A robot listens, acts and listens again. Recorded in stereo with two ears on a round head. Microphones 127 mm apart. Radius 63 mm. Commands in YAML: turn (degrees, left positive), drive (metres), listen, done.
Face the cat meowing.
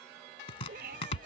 turn: -90
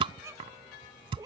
turn: -30
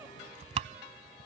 listen: true
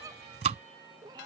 turn: -30
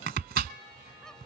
listen: true
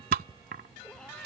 listen: true
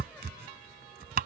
done: "I heard a cat meowing from this way, but can't make it out now."